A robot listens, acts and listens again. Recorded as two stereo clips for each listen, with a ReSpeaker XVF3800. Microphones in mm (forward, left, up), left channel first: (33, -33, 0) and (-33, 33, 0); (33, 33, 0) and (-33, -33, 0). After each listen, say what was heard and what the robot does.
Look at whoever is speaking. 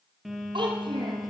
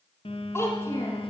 The child speaking: 105° left. Turn 105° left.
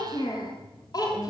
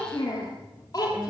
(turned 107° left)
Facing the child speaking.